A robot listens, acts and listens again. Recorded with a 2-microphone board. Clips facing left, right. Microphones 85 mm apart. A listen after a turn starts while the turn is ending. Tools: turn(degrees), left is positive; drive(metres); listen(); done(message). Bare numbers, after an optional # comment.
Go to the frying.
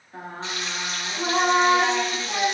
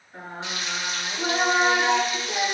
# The frying: about 35° left or 145° left.
turn(35)
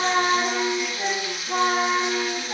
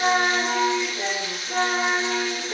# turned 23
# So it is at 15° left.
turn(15)
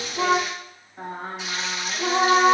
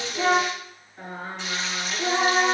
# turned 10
drive(1.0)
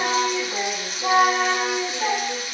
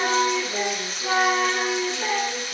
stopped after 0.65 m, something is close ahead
done("Blocked. The frying is further on, straight ahead.")